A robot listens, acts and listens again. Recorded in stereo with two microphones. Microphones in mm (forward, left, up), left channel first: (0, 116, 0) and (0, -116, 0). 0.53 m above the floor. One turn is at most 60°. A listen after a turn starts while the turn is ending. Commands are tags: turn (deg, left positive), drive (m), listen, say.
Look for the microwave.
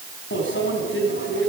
<turn deg="55"/>
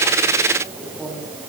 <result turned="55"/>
<say>Facing the microwave.</say>